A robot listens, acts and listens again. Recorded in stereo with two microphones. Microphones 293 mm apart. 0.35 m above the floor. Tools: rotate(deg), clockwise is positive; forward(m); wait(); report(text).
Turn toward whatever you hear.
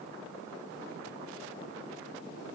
wait()
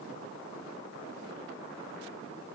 wait()
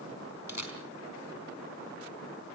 rotate(-70)
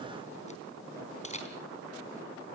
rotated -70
rotate(-25)
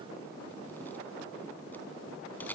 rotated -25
report("Facing the camera shutter.")